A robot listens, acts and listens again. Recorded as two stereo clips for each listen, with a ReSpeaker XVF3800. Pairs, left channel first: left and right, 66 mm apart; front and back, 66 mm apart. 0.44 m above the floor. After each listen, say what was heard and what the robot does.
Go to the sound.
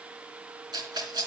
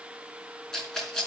The rattle: 85° right. Turn 85° right.
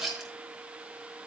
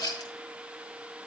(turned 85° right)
The rattle is now 10° right. Turn 10° right.
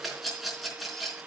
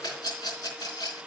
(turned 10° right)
Drive 1.0 m forward.
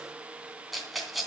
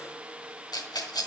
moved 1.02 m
Drive 1.0 m forward.
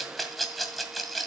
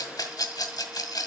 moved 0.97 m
Drive 1.0 m forward.
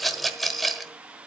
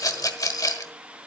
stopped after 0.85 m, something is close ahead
I am next to the rattle.